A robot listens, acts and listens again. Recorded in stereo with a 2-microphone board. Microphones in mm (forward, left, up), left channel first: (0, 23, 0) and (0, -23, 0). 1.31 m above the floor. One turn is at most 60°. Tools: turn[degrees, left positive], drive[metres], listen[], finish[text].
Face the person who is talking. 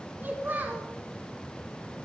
Thought: The child speaking: about 45° right or 135° right.
Action: turn[-45]
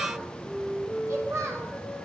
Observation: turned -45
Thought: So it is at 90° right.
Action: turn[-60]
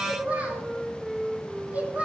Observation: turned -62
Thought: The child speaking is now 30° right.
Action: turn[-30]
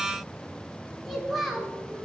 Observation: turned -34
Action: finish[Facing the child speaking.]